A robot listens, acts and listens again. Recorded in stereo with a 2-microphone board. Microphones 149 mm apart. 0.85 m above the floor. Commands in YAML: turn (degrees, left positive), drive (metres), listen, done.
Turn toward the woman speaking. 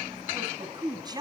turn: -25
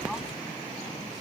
listen: true
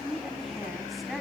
done: "Found it: a woman speaking, straight ahead, over 4 m away."